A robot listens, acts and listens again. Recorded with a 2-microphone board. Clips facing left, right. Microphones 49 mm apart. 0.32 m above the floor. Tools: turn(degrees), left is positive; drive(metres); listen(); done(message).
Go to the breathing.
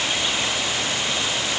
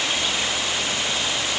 listen()
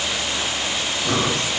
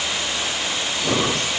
turn(degrees=-35)
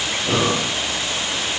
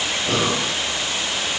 drive(metres=1.0)
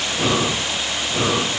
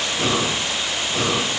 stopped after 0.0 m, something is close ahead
done("Blocked. The breathing is further on, straight ahead.")